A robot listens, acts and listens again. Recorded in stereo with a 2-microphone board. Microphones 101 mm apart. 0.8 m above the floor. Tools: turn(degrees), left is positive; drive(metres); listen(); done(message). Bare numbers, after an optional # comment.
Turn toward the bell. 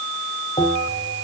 turn(90)
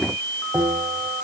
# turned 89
# So it is at 10° right.
turn(-10)
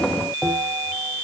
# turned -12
done("Found it: a bell, straight ahead, over 4 m away.")